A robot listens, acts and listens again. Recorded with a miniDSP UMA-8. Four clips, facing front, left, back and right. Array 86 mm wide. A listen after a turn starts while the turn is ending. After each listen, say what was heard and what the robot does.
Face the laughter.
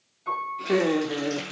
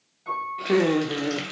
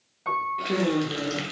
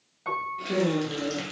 The laughter: 65° left. Turn 65° left.
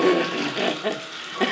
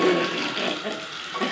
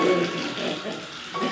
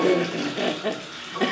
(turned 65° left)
The laughter is now 10° right. Turn 10° right.
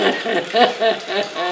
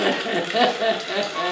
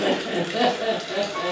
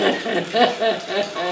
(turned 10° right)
Found it: laughter, straight ahead, 1 to 2 m away.